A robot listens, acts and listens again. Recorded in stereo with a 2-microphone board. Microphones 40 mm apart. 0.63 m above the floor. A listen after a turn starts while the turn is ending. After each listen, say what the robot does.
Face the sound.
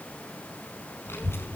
Turn 90° left.
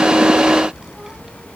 Turn 15° right.
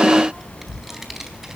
Turn 10° right.
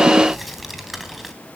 Found it: a child speaking, straight ahead, 2 to 4 m away.